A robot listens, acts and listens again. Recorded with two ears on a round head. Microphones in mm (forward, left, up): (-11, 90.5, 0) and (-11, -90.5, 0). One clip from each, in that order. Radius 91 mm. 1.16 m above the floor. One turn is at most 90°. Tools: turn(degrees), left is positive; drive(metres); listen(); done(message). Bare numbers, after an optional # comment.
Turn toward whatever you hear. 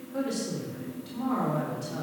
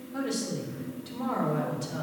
# The woman speaking: about 25° right or 155° right.
turn(-25)
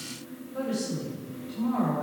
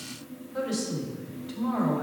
# So it is at 120° right.
turn(-90)
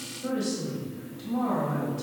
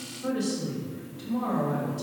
# The woman speaking is now 20° right.
turn(-20)
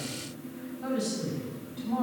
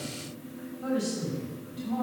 done("Facing the woman speaking, over 4 m away.")